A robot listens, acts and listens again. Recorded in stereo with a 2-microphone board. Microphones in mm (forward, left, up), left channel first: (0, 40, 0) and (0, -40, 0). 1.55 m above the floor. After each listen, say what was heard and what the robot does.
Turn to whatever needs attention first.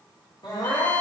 The crying: about 65° left or 115° left. Turn 65° left.
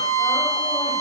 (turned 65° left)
Keep listening.
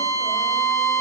Keep listening.
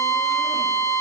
I heard crying, but can't make it out now. It was about straight ahead or 50° left.